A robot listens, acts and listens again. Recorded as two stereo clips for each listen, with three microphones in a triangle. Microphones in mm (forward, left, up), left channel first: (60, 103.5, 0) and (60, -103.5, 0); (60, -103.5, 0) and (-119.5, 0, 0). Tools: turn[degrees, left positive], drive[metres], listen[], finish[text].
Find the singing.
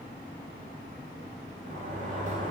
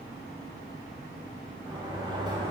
Action: listen[]
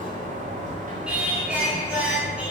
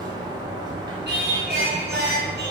Thought: The singing: 175° right.
Action: turn[-175]
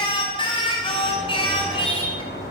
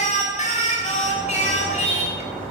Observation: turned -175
Thought: The singing is now 25° left.
Action: turn[25]
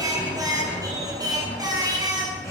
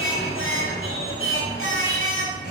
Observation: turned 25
Thought: The singing is now 15° right.
Action: turn[-15]
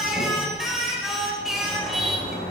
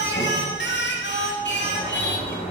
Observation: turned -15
Action: finish[Found it: singing, straight ahead.]